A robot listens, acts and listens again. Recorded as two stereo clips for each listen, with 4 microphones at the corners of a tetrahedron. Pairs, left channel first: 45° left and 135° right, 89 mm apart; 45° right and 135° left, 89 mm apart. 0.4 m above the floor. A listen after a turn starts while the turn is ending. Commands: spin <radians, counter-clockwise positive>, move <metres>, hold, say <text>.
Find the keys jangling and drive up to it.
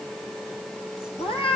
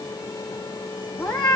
hold
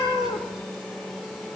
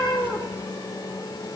hold
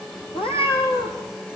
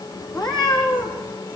say I can't make out keys jangling, only a cat meowing.